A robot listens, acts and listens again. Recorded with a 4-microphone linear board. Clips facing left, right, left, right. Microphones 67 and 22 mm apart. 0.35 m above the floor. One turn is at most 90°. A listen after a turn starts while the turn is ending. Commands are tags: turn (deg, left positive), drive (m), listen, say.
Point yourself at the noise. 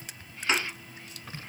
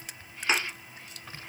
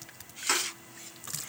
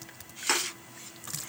<turn deg="-30"/>
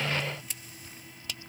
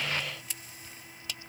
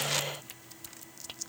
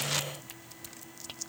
<listen/>
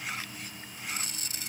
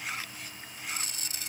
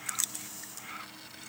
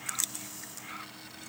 <say>I heard a thud, but can't make it out now. It was about 20° left or 140° right.</say>